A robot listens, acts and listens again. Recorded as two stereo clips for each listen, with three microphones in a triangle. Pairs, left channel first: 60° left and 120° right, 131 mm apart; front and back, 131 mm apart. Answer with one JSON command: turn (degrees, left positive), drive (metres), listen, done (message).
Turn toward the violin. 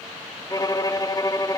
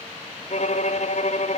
{"done": "Found it: a violin, straight ahead."}